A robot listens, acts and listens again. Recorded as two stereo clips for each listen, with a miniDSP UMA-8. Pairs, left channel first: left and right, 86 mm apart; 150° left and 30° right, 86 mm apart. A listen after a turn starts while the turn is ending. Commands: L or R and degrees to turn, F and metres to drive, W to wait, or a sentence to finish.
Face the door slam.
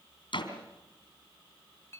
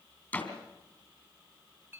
L80
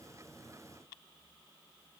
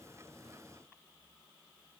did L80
Facing where the door slam came from. I can't hear it now.